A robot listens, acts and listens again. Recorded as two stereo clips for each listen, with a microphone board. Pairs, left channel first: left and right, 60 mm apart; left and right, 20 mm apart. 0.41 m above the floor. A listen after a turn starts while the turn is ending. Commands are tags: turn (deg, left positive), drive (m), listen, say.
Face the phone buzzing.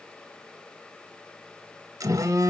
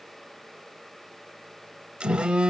<turn deg="-70"/>
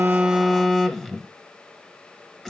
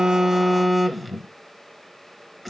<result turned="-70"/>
<say>Found it: a phone buzzing, straight ahead.</say>